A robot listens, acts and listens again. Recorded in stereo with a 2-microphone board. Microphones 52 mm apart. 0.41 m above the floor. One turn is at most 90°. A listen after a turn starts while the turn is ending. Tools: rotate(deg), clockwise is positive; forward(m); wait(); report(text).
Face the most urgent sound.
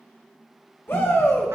rotate(-50)
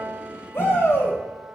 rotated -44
rotate(-70)
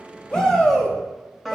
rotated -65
rotate(-10)
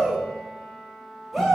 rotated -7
report("Found it: a shout, straight ahead, 2 to 4 m away.")